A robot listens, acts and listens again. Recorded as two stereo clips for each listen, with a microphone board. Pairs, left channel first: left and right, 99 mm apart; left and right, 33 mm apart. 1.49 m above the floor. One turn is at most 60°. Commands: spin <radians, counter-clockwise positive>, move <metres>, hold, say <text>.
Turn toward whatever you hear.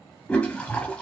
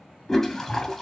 spin 0.52
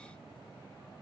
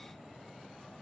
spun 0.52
hold
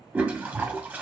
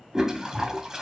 spin -0.26
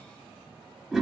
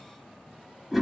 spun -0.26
say Facing the toilet flushing.